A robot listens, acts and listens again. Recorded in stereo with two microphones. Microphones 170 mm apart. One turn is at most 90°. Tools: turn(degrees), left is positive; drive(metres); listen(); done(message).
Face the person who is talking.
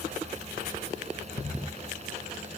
listen()
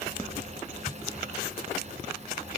listen()
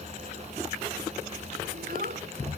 turn(degrees=-60)
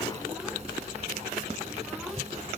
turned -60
listen()
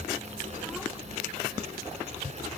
listen()
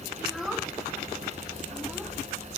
done("Facing the child speaking.")